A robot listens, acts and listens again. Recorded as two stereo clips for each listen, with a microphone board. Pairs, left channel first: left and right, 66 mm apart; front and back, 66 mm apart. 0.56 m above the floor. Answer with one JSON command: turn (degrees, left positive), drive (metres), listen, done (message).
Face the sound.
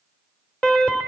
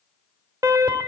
{"turn": 165}
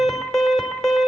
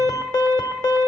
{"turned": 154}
{"turn": 10}
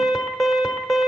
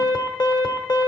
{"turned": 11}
{"done": "Facing the alarm."}